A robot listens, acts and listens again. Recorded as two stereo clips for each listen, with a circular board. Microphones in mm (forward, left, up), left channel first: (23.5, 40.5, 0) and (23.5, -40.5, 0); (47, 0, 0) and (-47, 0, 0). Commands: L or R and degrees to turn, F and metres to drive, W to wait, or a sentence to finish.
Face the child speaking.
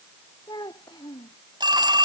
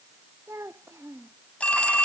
L120
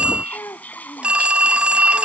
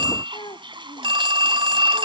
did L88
L35
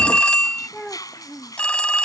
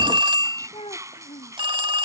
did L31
Found it: a child speaking, straight ahead.